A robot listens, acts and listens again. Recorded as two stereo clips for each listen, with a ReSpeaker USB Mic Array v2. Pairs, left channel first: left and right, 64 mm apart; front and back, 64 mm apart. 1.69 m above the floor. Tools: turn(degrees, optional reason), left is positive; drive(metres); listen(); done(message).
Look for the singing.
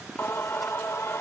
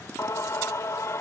turn(degrees=40, reason="The singing: 40° left.")
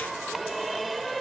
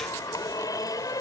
done("Facing the singing.")